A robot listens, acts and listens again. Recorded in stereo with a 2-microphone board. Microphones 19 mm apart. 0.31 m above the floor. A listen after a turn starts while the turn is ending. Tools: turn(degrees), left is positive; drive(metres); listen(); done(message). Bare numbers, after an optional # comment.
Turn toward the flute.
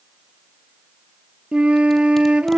turn(-90)
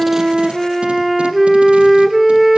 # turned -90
done("Facing the flute.")